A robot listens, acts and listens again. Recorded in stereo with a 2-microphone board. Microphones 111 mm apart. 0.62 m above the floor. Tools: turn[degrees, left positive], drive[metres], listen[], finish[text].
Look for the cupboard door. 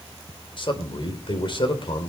Action: listen[]
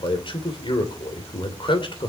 Action: listen[]
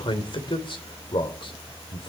Action: finish[I can't make out a cupboard door to turn to.]